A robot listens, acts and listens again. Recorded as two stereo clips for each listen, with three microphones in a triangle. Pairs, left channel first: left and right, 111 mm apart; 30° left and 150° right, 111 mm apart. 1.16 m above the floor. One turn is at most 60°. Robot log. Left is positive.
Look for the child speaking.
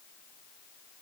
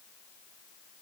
cmd idle
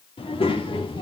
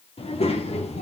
note: The child speaking: 50° left.
cmd yaw +50
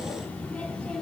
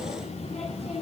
note: The child speaking is now 10° left.
cmd yaw +10
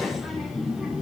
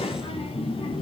note: The child speaking is now 10° right.
cmd yaw -10
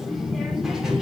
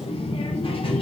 end: Found it: a child speaking, straight ahead.